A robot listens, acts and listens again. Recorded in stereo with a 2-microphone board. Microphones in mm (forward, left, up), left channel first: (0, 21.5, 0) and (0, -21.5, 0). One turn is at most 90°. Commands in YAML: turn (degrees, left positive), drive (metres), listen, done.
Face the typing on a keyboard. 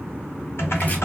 turn: 65
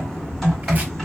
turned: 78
turn: 10
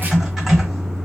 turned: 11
done: "Found it: typing on a keyboard, straight ahead."